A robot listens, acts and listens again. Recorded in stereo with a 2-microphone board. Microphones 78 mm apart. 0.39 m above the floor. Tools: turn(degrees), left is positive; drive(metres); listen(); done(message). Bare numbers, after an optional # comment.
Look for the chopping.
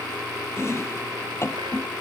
# The chopping: about 35° left or 145° left.
turn(35)
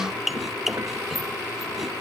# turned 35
done("Found it: chopping, straight ahead.")